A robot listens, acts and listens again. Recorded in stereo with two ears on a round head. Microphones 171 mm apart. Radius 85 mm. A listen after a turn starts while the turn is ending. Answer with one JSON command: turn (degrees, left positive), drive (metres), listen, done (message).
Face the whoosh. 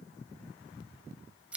{"listen": true}
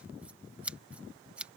{"listen": true}
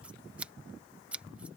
{"done": "I can't make out a whoosh, only scissors."}